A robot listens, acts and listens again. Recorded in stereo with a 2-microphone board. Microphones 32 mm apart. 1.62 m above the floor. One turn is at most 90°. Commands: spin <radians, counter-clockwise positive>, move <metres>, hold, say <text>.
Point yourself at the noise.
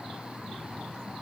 hold
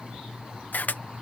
spin 1.05
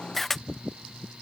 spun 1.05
say Found it: a camera shutter, straight ahead.